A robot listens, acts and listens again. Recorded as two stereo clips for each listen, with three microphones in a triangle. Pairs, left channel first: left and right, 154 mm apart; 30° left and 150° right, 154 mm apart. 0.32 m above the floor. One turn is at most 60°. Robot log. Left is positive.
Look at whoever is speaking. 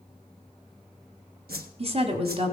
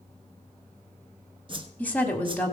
note: The woman speaking: 50° right.
cmd yaw -50
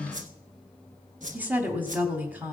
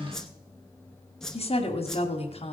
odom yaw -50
note: The woman speaking is now 10° right.
cmd yaw -10
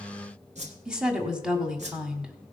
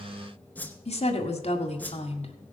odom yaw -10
end: Found it: a woman speaking, straight ahead, 1 to 2 m away.